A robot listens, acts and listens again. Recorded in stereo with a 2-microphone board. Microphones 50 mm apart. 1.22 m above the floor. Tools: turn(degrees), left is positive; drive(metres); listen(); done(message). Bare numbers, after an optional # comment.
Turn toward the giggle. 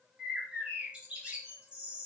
listen()
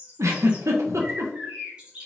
turn(-90)
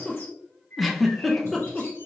done("Facing the giggle.")